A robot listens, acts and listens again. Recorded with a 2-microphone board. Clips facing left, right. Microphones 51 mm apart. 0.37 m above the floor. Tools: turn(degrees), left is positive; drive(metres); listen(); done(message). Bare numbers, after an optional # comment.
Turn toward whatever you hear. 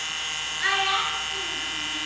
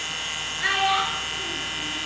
turn(30)
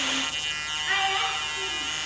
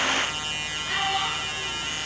# So it is at 135° left.
turn(135)
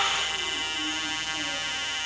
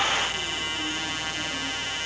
listen()
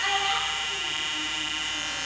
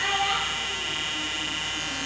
# The child speaking is now 10° right.
turn(-10)
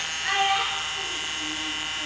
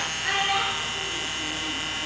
done("Found it: a child speaking, straight ahead.")